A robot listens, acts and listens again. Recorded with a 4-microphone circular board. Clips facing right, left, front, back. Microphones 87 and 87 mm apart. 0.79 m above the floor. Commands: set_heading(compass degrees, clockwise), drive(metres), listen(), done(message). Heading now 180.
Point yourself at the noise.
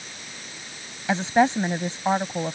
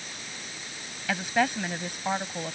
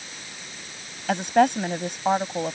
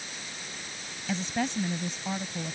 set_heading(205)
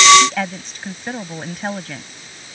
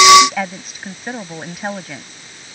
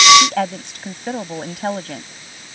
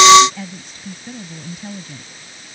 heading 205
done("Found it: a woman speaking, straight ahead.")